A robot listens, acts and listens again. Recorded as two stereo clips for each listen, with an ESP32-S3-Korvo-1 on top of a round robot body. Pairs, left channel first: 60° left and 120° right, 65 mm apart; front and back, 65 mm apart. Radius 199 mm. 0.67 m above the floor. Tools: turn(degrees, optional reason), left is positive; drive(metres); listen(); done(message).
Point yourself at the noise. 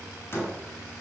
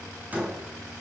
turn(degrees=115, reason="The door slam: 115° left.")
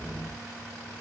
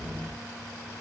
done("I heard a door slam from this way, but can't make it out now.")